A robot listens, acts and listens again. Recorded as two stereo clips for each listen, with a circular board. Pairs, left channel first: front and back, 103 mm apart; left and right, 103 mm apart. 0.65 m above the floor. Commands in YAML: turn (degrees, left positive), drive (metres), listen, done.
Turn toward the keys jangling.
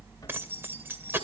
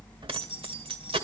turn: -115
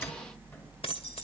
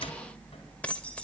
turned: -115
turn: 10
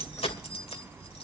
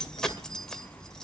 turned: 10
done: "Facing the keys jangling, 2 to 4 m away."